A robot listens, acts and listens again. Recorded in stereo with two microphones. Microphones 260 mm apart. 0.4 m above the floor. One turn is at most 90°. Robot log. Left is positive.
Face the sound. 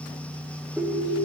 cmd yaw -30
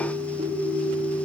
note: So it is at 145° right.
cmd yaw -90
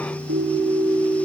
note: The ringtone is now 55° right.
cmd yaw -55
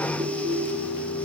note: The ringtone is now 30° right.
cmd yaw -30
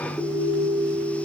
end: Facing the ringtone, over 4 m away.